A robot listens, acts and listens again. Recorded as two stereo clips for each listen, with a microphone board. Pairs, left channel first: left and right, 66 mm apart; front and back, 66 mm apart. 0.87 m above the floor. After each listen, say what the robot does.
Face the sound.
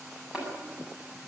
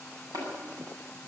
Turn 165° right.
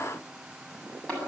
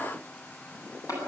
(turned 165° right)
Turn 20° left.
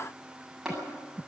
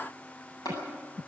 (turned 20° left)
Found it: tapping, straight ahead.